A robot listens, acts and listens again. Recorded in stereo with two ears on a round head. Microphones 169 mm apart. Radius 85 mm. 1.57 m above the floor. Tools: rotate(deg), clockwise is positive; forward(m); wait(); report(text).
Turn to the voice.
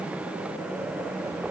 wait()
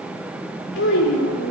rotate(-75)
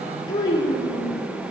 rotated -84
rotate(-20)
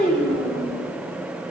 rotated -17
report("Facing the child speaking.")